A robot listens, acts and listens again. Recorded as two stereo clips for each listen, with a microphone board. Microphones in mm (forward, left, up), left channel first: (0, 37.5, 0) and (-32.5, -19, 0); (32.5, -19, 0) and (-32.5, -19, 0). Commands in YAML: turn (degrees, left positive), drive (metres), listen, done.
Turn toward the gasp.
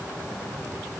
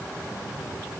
listen: true
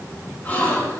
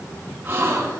turn: 125
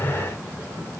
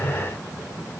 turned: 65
turn: 60
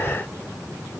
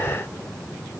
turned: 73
turn: -15
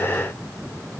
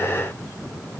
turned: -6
done: "Facing where the gasp came from. I can't hear it now."